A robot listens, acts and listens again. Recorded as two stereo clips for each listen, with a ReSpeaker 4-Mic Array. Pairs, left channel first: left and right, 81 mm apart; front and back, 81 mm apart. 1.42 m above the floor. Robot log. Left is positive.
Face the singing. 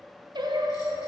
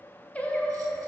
note: The singing: 75° right.
cmd yaw -75
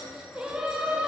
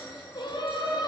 note: The singing is now 10° right.
cmd yaw -10
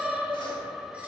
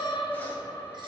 end: Found it: singing, straight ahead, under 1 m away.